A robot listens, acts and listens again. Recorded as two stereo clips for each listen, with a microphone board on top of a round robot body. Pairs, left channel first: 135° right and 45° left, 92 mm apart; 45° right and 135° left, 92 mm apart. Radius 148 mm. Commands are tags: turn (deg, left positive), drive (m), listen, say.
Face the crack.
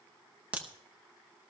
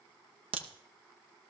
<turn deg="120"/>
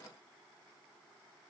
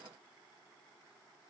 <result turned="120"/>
<say>I heard a crack from this way, but can't make it out now.</say>